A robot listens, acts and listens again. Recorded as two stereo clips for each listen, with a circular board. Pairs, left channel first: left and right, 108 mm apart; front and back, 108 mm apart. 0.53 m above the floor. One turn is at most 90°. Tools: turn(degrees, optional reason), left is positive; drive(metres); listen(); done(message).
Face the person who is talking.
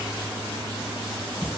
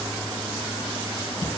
listen()
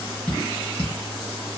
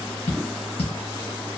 listen()
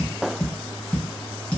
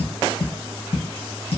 done("I can't make out anyone speaking, only tapping.")